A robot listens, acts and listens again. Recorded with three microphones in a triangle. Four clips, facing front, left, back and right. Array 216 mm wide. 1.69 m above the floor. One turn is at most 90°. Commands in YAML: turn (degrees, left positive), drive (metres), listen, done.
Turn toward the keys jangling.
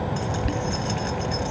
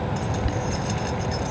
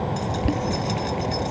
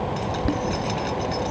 turn: -70
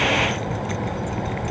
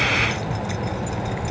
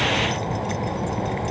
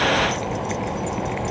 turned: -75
done: "Found it: keys jangling, straight ahead."